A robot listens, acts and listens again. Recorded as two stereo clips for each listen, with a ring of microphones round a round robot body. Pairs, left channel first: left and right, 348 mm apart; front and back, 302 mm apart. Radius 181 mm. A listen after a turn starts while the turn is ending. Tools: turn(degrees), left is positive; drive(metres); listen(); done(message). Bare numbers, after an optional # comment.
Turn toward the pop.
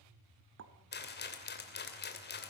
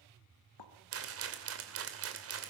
# The pop: 30° right.
turn(-30)
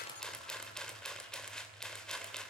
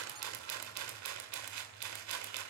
done("Facing where the pop came from. I can't hear it now.")